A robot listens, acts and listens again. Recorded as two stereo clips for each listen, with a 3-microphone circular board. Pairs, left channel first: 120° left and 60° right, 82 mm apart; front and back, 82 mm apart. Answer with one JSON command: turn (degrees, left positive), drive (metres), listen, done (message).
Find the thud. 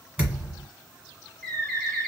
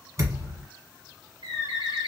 {"turn": -135}
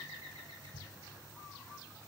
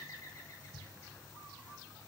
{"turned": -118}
{"turn": -15}
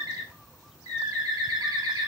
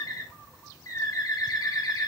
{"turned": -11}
{"done": "I heard a thud from this way, but can't make it out now."}